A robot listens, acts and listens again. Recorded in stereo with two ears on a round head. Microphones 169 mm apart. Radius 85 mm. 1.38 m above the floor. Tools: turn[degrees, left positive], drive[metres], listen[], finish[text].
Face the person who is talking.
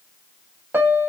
Action: listen[]
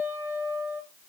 Action: listen[]
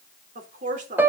Thought: The woman speaking: about 45° right or 135° right.
Action: turn[-45]
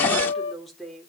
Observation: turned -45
Action: finish[Facing the woman speaking, over 4 m away.]